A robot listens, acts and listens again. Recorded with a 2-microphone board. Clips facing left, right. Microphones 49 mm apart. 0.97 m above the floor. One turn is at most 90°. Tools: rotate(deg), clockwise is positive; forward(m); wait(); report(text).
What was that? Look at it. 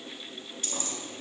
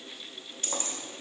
rotate(40)
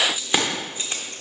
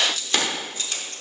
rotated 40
rotate(-30)
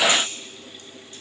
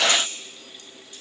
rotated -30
wait()
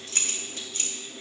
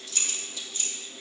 rotate(-55)
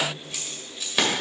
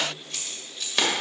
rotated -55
report("Found it: keys jangling, straight ahead.")